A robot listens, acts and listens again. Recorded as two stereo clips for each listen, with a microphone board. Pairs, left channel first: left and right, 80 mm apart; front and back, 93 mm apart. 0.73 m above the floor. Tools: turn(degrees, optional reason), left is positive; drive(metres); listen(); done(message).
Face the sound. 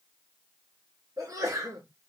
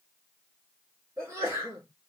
turn(degrees=-120, reason="The sneeze: 120° right.")
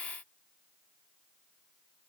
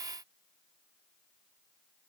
done("I heard a sneeze from this way, but can't make it out now.")